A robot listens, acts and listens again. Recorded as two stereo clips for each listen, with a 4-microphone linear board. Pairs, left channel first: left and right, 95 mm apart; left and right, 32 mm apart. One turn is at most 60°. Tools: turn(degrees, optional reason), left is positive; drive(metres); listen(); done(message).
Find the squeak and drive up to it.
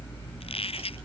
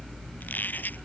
turn(degrees=60, reason="The squeak: about 75° left or 105° left.")
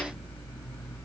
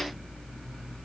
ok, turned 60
listen()
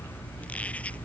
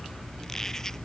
listen()
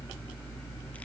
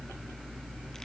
done("I heard a squeak, but can't make it out now. It was about 15° left or 45° left. I did not reach it.")